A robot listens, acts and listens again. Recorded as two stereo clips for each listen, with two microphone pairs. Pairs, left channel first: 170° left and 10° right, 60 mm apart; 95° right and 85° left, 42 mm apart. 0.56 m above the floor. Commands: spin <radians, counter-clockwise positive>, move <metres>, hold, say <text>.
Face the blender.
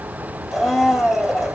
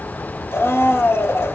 spin -1.66
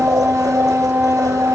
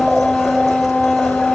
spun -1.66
say Found it: a blender, straight ahead, 2 to 4 m away.